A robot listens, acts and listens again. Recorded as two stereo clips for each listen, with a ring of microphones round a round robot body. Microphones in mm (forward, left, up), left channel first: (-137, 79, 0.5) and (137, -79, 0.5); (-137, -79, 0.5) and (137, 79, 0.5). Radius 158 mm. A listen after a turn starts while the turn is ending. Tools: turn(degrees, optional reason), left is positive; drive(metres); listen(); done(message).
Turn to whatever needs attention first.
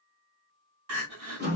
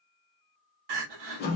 turn(degrees=15, reason="The crying: 15° left.")
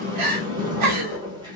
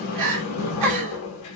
done("Found it: crying, straight ahead, 1 to 2 m away.")